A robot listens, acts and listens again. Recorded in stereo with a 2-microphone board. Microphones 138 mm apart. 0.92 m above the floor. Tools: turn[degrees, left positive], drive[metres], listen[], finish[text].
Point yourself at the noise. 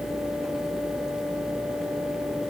Action: listen[]
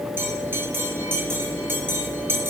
Thought: The bell: about 15° right or 165° right.
Action: turn[-15]
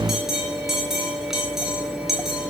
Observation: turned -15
Action: finish[Found it: a bell, straight ahead.]